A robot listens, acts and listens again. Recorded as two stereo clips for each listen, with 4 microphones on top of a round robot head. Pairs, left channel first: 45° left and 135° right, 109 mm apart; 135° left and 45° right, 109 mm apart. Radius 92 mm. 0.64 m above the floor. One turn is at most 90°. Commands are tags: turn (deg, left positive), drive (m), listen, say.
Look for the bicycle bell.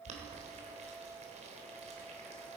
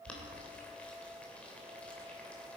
<listen/>
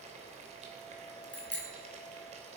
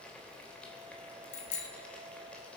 <turn deg="90"/>
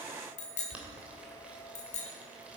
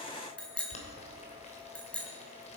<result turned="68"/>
<turn deg="55"/>
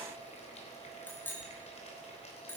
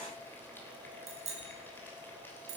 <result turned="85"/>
<turn deg="-30"/>
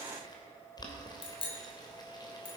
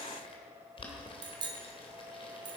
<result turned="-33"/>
<say>Facing the bicycle bell, 2 to 4 m away.</say>